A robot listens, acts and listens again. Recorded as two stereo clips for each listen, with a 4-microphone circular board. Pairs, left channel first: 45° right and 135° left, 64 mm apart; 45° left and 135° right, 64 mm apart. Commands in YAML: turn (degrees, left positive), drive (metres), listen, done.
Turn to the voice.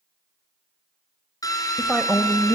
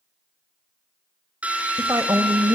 turn: -140
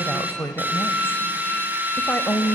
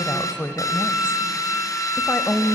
done: "Found it: a woman speaking, straight ahead."